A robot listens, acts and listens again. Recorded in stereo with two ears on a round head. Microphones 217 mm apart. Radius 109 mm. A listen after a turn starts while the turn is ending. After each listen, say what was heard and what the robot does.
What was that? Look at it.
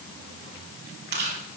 The chewing: about 45° right or 135° right. Turn 45° right.
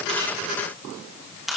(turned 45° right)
Found it: chewing, straight ahead.